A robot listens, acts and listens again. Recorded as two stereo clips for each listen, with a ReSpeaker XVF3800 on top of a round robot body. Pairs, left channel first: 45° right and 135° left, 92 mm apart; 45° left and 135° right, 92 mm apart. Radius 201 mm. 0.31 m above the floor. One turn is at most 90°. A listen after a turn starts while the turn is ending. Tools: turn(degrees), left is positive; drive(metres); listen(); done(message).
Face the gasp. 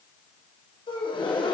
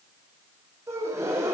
turn(degrees=-75)
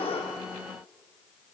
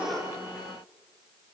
done("Facing where the gasp came from. I can't hear it now.")